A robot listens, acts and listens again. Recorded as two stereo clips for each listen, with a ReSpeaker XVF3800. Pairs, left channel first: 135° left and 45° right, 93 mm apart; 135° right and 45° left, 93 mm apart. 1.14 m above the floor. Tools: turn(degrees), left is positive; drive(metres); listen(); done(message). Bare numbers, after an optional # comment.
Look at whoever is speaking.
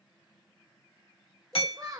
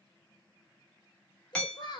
# The child speaking: 95° right.
turn(-95)
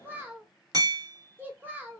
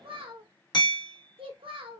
# The child speaking is now 25° left.
turn(25)
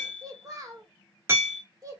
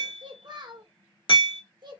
# The child speaking is now 10° left.
turn(10)
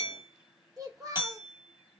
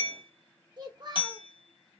done("Found it: a child speaking, straight ahead.")